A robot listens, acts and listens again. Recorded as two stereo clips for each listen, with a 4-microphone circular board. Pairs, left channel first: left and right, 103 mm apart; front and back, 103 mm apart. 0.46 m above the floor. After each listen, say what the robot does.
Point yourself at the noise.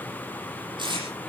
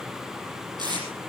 Turn 130° right.
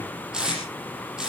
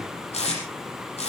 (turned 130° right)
Turn 10° right.
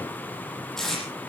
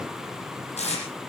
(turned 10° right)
Found it: tape being pulled, straight ahead, over 4 m away.